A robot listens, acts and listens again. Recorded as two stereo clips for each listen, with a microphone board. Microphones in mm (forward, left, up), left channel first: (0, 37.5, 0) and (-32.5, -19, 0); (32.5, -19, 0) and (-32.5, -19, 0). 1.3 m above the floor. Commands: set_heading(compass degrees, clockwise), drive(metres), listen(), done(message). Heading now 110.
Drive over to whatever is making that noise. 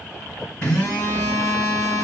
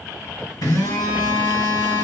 set_heading(120)
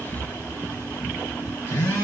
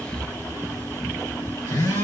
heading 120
drive(1.0)
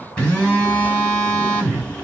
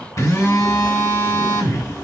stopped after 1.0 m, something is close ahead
set_heading(130)
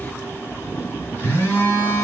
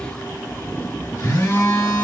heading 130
done("Arrived at the phone buzzing, straight ahead.")